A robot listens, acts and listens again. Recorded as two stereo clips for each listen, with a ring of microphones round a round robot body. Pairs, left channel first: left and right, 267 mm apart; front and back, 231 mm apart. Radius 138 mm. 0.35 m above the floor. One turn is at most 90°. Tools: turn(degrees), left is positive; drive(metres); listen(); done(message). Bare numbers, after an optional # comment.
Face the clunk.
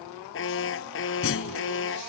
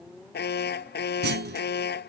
# The clunk: 135° left.
turn(90)
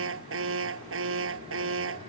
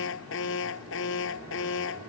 # Nothing new. It was at 45° left.
turn(45)
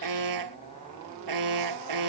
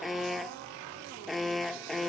done("I heard a clunk from this way, but can't make it out now.")